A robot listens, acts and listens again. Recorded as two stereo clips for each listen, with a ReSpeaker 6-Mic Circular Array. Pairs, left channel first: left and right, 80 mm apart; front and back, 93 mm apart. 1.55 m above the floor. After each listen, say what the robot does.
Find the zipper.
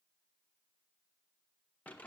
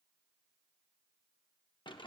Keep listening.
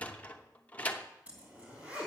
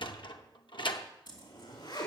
Turn 20° right.
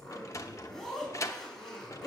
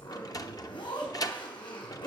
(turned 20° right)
Found it: a zipper, straight ahead, 2 to 4 m away.